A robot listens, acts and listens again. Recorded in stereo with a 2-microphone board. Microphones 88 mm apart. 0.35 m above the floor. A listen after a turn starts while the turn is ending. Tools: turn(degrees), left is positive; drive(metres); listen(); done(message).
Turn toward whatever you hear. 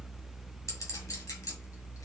turn(degrees=35)
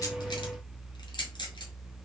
turn(degrees=105)
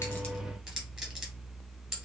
done("Found it: a clink, straight ahead, 1 to 2 m away.")